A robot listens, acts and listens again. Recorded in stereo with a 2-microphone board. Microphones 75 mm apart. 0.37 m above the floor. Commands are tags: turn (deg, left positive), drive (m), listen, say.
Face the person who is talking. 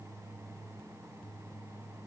<listen/>
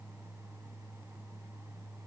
<listen/>
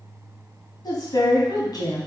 <turn deg="65"/>
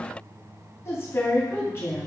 <turn deg="40"/>
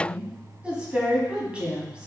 <turn deg="-15"/>
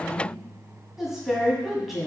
<say>Facing the woman speaking.</say>